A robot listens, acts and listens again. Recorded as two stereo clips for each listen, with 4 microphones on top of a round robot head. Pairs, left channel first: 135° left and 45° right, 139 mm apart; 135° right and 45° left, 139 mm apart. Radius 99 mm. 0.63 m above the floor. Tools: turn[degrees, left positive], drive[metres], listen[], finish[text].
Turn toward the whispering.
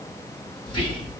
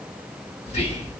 Thought: The whispering: 175° right.
Action: turn[-175]
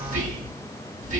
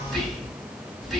Thought: The whispering is now 50° right.
Action: turn[-50]
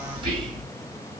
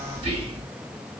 Action: finish[Facing the whispering.]